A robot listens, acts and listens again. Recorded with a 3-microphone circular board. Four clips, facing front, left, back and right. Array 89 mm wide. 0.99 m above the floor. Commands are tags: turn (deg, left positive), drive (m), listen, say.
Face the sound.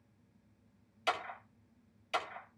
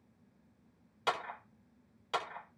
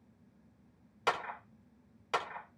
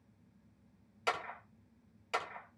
<turn deg="165"/>
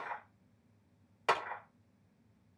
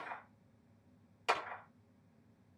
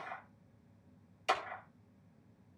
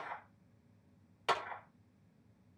<turn deg="-10"/>
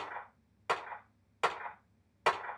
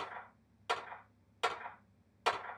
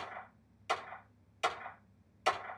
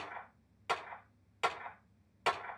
<say>Found it: a clap, straight ahead, 2 to 4 m away.</say>